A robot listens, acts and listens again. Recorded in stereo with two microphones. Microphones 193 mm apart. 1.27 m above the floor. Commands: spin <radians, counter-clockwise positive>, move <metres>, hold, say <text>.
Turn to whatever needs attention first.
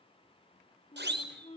spin -1.13
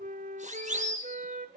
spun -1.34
spin -0.70
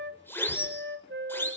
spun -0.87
spin 0.17
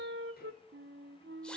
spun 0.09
hold
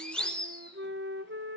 say Found it: a siren, straight ahead.